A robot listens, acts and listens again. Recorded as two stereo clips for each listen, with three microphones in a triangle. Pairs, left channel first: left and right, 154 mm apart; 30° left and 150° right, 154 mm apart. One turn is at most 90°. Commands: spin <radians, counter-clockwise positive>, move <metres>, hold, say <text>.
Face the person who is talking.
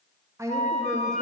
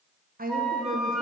spin -1.57
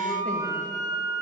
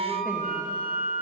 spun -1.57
spin -1.22
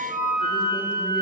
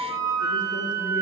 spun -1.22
hold
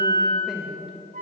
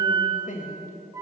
say Found it: a woman speaking, straight ahead.